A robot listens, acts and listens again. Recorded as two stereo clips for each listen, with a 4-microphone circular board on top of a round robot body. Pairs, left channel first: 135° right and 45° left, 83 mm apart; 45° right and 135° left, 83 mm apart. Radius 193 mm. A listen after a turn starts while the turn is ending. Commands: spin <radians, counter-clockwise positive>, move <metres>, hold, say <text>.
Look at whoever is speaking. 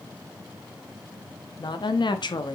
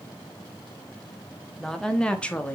spin -2.01
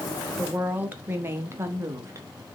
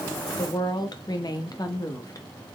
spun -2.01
say Facing the woman speaking, 1 to 2 m away.